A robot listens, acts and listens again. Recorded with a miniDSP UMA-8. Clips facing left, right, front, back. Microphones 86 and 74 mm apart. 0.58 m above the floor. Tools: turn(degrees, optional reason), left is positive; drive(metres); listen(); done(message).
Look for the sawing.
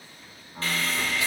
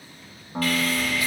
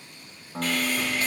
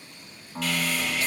turn(degrees=35, reason="The sawing: 35° left.")
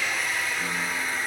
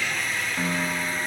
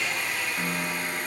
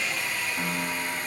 done("Found it: sawing, straight ahead, 2 to 4 m away.")